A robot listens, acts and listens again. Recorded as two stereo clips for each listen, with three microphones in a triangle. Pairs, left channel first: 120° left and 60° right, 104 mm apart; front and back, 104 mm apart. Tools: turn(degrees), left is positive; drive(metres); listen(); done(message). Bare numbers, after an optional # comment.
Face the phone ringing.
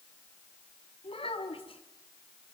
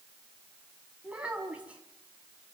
listen()
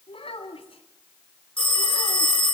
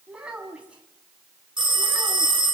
# The phone ringing: 145° left.
turn(145)
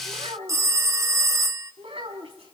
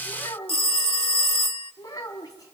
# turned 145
done("Found it: a phone ringing, straight ahead.")